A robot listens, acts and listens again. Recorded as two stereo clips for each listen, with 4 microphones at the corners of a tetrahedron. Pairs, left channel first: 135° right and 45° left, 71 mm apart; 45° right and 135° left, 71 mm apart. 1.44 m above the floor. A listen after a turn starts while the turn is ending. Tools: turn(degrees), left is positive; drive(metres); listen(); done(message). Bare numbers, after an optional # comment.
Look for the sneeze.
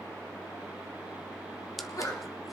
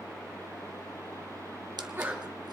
# The sneeze: 170° right.
turn(-170)
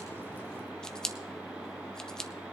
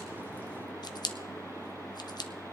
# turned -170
done("Facing where the sneeze came from. I can't hear it now.")